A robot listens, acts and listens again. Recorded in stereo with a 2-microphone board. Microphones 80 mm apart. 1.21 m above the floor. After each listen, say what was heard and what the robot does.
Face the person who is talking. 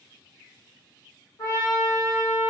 Keep listening.
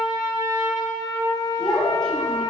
Turn 30° left.
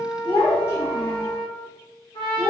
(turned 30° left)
So it is at 140° left. Turn 140° left.
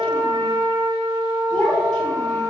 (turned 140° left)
The child speaking is now 10° left. Turn 10° left.
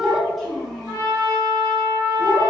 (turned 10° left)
Found it: a child speaking, straight ahead.